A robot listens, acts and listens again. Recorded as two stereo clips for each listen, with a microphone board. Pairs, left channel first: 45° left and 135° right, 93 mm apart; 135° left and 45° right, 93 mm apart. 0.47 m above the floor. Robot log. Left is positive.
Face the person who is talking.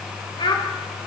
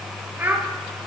note: The child speaking: 20° left.
cmd yaw +20
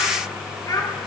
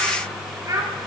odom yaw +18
end: Facing the child speaking.